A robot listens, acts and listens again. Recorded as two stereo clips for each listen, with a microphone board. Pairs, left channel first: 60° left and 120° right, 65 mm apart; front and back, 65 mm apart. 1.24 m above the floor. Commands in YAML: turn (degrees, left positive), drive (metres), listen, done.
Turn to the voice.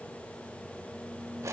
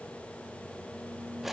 listen: true
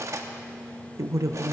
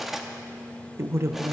turn: -140
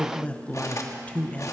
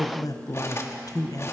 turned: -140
done: "Found it: a man speaking, straight ahead."